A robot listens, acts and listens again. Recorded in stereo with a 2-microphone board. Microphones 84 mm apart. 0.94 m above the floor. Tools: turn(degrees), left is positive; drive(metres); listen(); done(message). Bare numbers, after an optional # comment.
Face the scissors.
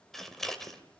turn(30)
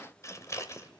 # So it is at 145° left.
turn(145)
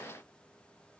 listen()
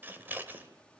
# The scissors is now 20° right.
turn(-20)
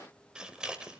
# The scissors is now 10° right.
turn(-10)
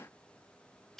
done("Found it: scissors, straight ahead.")